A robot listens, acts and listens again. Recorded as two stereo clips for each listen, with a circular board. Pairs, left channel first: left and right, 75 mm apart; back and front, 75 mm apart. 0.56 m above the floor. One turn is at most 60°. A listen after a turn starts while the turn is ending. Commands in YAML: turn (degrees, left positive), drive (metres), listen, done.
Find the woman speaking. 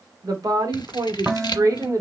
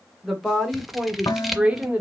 turn: -60
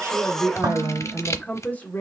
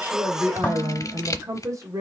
turn: 30
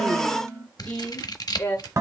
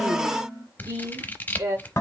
turn: 30
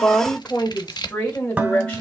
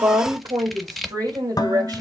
turn: 15
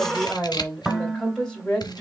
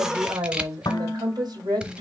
done: "Facing the woman speaking, 2 to 4 m away."